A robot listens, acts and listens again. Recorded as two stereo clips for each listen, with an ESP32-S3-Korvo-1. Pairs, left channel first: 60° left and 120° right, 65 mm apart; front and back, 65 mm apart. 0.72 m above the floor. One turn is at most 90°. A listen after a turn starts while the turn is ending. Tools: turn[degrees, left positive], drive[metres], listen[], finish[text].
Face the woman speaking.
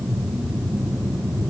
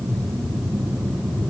Action: listen[]
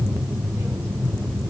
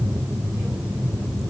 Action: listen[]
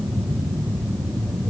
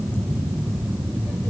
Action: finish[I can't make out a woman speaking.]